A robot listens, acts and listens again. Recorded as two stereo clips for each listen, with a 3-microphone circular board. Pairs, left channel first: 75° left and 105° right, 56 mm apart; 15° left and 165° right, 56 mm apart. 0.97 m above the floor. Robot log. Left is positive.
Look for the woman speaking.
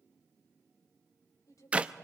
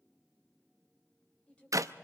note: The woman speaking: 85° left.
cmd yaw +85
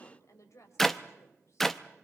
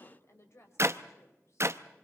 note: The woman speaking is now 50° left.
cmd yaw +50
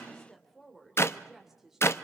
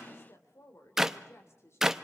note: The woman speaking is now 20° right.
cmd yaw -20
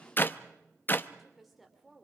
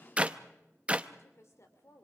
note: The woman speaking is now 15° right.
cmd yaw -15
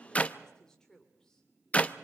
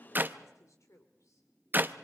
end: Found it: a woman speaking, straight ahead.